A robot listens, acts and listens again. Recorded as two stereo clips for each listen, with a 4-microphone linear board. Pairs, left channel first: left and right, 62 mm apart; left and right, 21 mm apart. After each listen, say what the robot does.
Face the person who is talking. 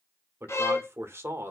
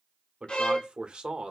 Turn 40° right.
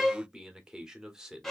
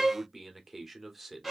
Turn 10° right.
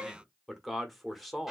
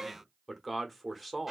Facing the man speaking.